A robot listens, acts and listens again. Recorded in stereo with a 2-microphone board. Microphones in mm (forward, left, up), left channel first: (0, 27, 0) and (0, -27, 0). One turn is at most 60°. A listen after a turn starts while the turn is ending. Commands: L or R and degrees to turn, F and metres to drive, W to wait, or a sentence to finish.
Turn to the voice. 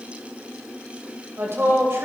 R55
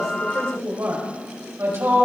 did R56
R50
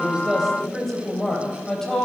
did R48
L10
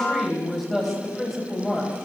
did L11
Facing the woman speaking, 2 to 4 m away.